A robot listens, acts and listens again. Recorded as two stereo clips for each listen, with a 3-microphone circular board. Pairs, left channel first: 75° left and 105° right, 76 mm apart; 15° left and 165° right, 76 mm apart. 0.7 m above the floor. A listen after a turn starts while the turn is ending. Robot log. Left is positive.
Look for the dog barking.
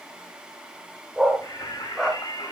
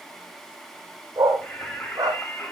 note: The dog barking: 170° left.
cmd yaw +170
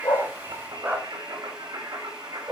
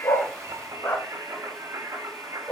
note: The dog barking is now 40° right.
cmd yaw -40
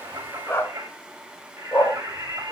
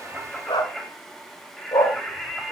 note: The dog barking is now 15° left.
cmd yaw +15
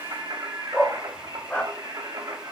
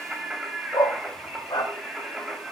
end: Found it: a dog barking, straight ahead.